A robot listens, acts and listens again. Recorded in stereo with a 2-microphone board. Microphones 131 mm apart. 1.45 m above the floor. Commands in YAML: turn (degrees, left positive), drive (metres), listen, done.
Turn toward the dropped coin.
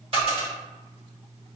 turn: -45
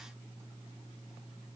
listen: true
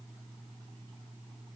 done: "I heard a dropped coin, but can't make it out now. It was about straight ahead or 90° right."